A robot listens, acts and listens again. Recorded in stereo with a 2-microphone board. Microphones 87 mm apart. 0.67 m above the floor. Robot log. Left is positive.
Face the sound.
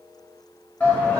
note: The shout: about 15° left or 165° left.
cmd yaw +15
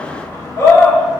note: So it is at 150° left.
cmd yaw +150
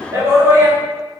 note: The shout is now 35° right.
cmd yaw -35
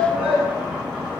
note: The shout is now 10° right.
cmd yaw -10
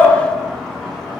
end: Found it: a shout, straight ahead, 1 to 2 m away.